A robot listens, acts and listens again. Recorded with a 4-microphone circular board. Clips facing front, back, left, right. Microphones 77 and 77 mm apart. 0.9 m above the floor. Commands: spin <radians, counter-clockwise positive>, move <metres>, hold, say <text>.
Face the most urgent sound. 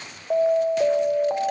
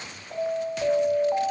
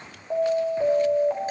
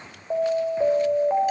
spin -0.26
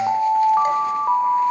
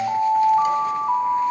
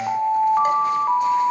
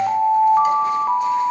say Found it: an alarm, straight ahead, 2 to 4 m away.